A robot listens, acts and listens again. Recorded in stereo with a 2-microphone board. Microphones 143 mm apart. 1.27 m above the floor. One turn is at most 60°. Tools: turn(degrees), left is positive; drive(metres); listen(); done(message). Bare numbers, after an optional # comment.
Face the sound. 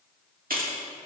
turn(-60)
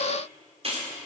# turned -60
# So it is at 45° right.
turn(-45)
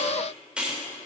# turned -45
done("Found it: keys jangling, straight ahead, 2 to 4 m away.")